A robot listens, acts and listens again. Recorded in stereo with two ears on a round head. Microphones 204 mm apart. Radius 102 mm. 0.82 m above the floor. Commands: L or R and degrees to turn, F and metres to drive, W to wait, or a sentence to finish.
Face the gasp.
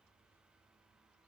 W
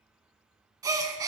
R15
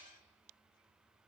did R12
W
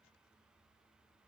I heard a gasp, but can't make it out now. It was about 5° right or 150° right.